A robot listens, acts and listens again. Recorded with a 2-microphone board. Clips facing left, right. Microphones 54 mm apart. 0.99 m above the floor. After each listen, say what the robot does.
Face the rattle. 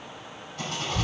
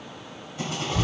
Turn 20° right.
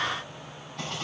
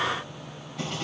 Found it: a rattle, straight ahead, 2 to 4 m away.